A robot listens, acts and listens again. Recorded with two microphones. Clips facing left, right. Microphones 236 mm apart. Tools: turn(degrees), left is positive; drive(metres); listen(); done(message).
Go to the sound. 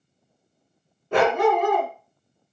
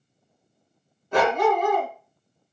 turn(degrees=70)
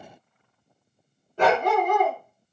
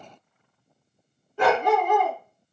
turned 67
turn(degrees=45)
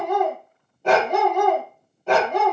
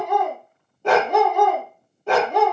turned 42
drive(metres=1.0)
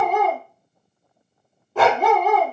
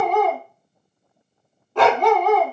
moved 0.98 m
drive(metres=1.0)
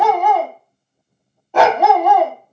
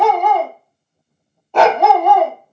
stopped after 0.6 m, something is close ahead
done("I am next to the dog barking.")